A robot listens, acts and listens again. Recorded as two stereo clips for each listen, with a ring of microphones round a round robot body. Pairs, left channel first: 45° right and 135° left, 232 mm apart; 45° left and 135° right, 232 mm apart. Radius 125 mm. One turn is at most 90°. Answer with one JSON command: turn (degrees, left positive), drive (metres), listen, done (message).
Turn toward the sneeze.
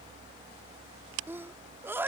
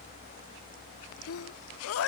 {"turn": 55}
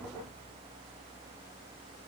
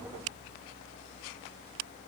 {"done": "Facing where the sneeze came from. I can't hear it now."}